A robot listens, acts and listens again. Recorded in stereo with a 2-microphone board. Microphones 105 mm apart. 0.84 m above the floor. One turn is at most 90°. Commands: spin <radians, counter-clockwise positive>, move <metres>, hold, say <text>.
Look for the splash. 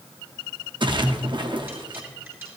spin -0.87
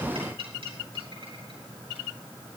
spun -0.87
hold
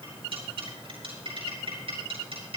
say I heard a splash, but can't make it out now. It was about straight ahead or 80° right.